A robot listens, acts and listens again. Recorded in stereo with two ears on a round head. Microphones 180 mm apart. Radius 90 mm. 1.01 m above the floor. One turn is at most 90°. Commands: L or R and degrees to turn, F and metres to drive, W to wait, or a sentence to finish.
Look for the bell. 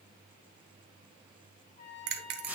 R55
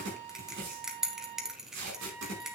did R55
Facing the bell, 1 to 2 m away.